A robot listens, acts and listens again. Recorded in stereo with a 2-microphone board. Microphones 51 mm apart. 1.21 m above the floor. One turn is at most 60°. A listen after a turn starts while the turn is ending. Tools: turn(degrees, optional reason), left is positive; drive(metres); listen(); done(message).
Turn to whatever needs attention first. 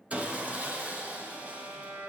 listen()
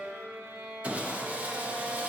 listen()
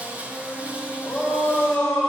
turn(degrees=30)
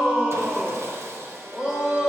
turn(degrees=-20, reason="So it is at 20° right.")
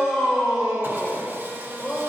done("Facing the shout, 2 to 4 m away.")